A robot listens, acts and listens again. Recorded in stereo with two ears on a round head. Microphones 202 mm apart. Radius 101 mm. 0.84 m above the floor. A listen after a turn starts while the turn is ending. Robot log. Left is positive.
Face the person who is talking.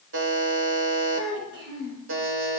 note: The child speaking: about 55° right or 125° right.
cmd yaw -55
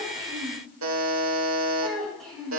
end: Found it: a child speaking, straight ahead.